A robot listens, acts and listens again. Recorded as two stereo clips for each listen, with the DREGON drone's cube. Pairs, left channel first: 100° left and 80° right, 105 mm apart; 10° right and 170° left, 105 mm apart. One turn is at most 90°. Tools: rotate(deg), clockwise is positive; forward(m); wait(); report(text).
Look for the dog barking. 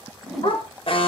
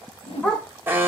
rotate(-65)
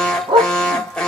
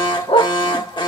rotate(45)
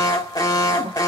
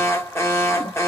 wait()
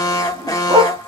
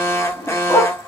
rotate(60)
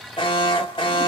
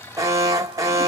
wait()
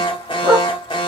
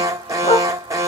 rotate(10)
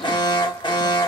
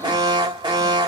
wait()
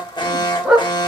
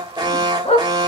report("Facing the dog barking, 1 to 2 m away.")